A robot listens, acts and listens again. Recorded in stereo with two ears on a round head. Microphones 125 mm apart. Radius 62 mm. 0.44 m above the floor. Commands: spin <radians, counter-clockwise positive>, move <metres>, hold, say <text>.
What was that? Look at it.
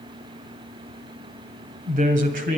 spin -1.05
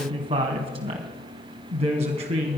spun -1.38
spin -0.79
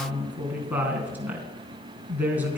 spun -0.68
spin -0.17
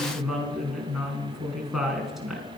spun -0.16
say Found it: a woman speaking, straight ahead, 2 to 4 m away.